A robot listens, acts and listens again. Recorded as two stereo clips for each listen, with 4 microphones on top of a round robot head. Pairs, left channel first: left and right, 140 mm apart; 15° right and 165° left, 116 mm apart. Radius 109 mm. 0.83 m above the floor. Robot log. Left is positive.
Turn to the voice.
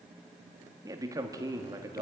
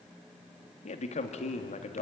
note: The man speaking: 25° right.
cmd yaw -25
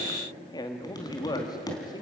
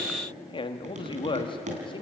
note: The man speaking is now 25° left.
cmd yaw +25
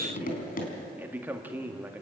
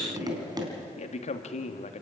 note: The man speaking is now 15° right.
cmd yaw -15
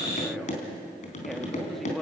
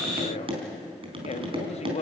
end: Facing the man speaking, 1 to 2 m away.